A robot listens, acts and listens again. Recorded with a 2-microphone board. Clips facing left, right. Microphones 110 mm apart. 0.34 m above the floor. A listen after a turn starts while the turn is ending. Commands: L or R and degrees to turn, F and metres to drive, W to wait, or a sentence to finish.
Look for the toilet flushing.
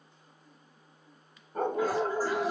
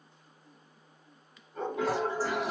R90
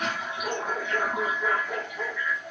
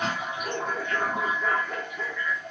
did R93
L15
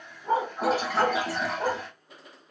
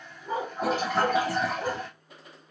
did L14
Found it: a toilet flushing, straight ahead.